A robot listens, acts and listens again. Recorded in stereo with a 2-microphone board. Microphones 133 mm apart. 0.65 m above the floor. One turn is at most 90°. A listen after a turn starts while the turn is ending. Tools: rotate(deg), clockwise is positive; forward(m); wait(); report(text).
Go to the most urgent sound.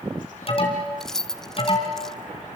rotate(-45)
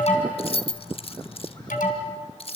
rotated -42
rotate(-90)
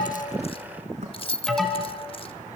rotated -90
forward(1.0)
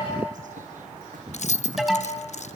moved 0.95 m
forward(1.0)
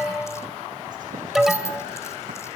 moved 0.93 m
forward(1.0)
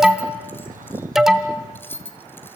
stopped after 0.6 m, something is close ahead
report("I am next to the alarm.")